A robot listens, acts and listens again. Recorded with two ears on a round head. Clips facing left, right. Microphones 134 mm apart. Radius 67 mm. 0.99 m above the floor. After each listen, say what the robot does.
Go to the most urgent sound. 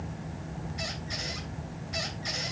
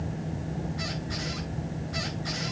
Keep listening.
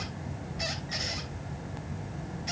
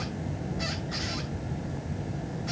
Keep listening.
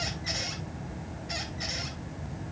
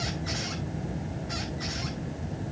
I can't make out anything urgent.